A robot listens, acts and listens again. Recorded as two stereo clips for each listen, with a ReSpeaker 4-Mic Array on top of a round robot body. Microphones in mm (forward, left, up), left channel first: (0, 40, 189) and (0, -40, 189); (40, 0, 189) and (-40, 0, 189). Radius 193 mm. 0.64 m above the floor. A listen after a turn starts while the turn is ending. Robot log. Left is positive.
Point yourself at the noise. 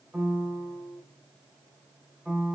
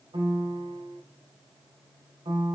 note: The piano: 165° right.
cmd yaw -165
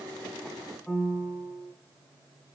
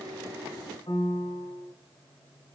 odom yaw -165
end: Facing the piano, 2 to 4 m away.